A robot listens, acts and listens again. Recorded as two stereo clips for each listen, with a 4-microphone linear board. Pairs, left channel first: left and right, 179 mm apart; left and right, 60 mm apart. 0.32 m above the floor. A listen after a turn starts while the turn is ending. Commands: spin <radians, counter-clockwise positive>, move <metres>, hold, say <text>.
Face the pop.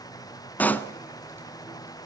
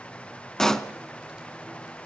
spin 0.52
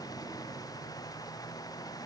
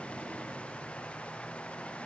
hold
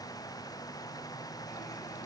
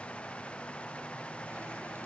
say I heard a pop, but can't make it out now. It was about 20° right or 140° left.